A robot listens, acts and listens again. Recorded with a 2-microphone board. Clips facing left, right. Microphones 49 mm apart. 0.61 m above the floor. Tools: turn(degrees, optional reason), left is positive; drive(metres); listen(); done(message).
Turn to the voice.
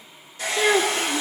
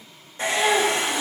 turn(degrees=75, reason="The child speaking: about 75° left or 105° left.")
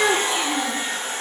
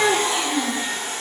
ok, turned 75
turn(degrees=30, reason="So it is at 30° left.")
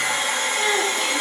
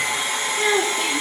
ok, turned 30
done("Found it: a child speaking, straight ahead, over 4 m away.")